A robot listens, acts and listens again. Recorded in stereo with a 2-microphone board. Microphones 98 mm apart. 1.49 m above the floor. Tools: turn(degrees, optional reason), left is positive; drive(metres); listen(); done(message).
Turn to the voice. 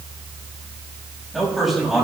turn(degrees=30)
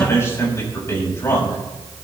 turn(degrees=155, reason="So it is at 155° left.")
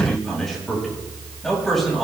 done("Facing the man speaking.")